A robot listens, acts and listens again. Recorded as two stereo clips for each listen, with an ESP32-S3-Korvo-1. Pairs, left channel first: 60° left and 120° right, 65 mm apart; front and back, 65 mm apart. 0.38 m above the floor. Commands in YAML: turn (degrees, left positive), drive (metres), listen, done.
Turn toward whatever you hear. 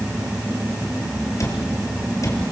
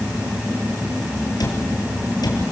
turn: 20
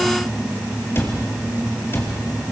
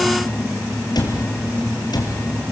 done: "Found it: a cupboard door, straight ahead, 2 to 4 m away."